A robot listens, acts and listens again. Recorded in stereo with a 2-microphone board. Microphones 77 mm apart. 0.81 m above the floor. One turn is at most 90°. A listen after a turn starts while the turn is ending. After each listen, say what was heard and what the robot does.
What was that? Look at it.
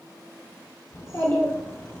The child speaking: about 30° left or 150° left. Turn 30° left.
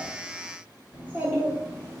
So it is at 40° right. Turn 40° right.
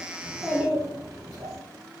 The child speaking is now 25° right. Turn 25° right.
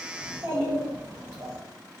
The child speaking is now 25° right. Turn 25° right.
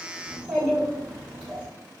Found it: a child speaking, straight ahead, 2 to 4 m away.